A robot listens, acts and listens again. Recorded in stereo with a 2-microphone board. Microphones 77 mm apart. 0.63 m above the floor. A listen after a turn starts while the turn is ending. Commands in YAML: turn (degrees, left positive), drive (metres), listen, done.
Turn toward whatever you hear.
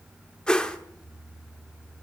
turn: 30
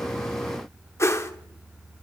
turn: 140
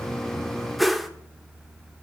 done: "Found it: a whoosh, straight ahead."